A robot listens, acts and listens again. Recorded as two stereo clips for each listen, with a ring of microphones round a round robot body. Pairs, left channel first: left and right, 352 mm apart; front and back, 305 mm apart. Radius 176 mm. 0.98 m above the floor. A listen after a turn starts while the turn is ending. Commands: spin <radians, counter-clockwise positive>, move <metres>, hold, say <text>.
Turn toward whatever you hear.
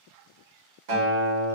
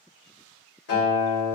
spin -1.13
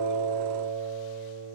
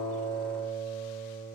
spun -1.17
say Facing the guitar.